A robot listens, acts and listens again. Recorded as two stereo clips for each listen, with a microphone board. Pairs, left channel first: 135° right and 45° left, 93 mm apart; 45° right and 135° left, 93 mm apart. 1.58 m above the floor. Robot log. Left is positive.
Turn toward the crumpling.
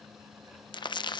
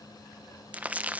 note: The crumpling: 155° right.
cmd yaw -155
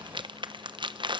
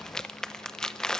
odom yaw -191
note: The crumpling is now 35° left.
cmd yaw +35
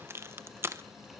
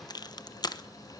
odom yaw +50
note: The crumpling is now 15° right.
cmd yaw -15
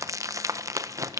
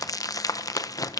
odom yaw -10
end: Facing the crumpling, under 1 m away.